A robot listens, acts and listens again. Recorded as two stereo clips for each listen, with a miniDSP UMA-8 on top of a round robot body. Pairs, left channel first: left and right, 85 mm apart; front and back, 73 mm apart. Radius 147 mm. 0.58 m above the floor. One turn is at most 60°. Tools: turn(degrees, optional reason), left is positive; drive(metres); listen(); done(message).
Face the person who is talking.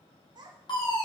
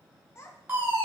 turn(degrees=-55, reason="The child speaking: 55° right.")
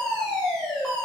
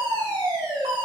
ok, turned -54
listen()
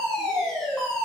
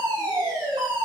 listen()
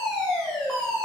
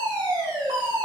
done("I heard a child speaking from this way, but can't make it out now.")